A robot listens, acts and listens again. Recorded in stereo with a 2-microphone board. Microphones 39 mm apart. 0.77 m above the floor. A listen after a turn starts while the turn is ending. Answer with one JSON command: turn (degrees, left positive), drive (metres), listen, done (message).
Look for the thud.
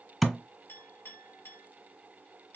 {"turn": 30}
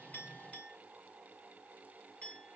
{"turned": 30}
{"listen": true}
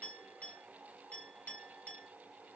{"done": "I heard a thud, but can't make it out now. It was about 30° right or 150° left."}